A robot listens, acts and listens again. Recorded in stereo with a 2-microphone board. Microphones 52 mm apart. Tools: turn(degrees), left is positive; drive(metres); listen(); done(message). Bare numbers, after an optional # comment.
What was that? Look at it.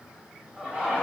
# The laughter: about 30° right or 150° right.
turn(-30)
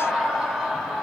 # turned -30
turn(-30)
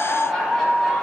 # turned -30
done("Facing the laughter, 2 to 4 m away.")